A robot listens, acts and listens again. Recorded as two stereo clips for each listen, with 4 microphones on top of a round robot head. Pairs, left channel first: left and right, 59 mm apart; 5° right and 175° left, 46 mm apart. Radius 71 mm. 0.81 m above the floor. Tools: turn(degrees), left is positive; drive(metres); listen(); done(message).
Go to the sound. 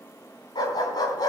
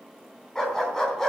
turn(degrees=75)
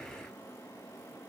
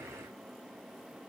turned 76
listen()
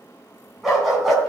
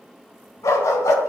drive(metres=1.0)
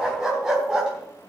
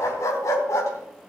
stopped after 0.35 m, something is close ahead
turn(degrees=-10)
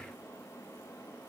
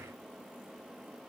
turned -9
listen()
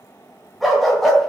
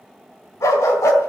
done("Something is in my way. I am facing the dog barking but have not reached it.")